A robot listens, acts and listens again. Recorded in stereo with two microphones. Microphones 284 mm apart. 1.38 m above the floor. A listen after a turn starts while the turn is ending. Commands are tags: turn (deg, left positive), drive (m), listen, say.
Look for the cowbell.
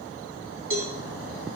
<turn deg="-45"/>
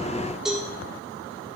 <say>Facing the cowbell, 1 to 2 m away.</say>